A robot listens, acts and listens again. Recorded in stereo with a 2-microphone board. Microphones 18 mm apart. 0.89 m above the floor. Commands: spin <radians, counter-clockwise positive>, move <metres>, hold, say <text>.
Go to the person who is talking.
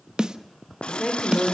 spin 0.52
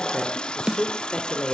spin 2.36
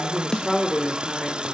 move 1.0
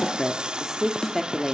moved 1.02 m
spin -0.17
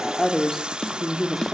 move 1.0
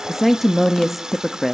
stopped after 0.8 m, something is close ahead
say I am next to the woman speaking.